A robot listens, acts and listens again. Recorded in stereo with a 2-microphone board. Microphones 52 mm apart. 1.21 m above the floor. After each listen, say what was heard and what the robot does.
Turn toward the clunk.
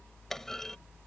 Turn 30° left.
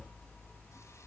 Keep listening.
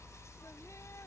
I heard a clunk, but can't make it out now. It was about 25° right or 145° left.